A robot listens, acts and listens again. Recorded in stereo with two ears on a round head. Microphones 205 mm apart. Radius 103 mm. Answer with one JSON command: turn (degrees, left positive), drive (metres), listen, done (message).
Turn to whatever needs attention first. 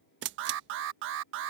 {"turn": -60}
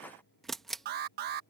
{"turn": -50}
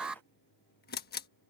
{"done": "Found it: an alarm, straight ahead."}